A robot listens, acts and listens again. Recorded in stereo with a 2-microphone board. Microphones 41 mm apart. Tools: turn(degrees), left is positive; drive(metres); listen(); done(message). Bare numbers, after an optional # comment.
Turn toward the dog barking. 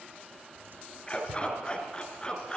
# The dog barking: about 20° left or 160° left.
turn(20)
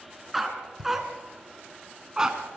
# So it is at 20° right.
turn(-20)
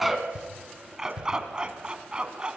# The dog barking is now 25° right.
turn(-25)
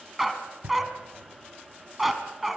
done("Found it: a dog barking, straight ahead, 1 to 2 m away.")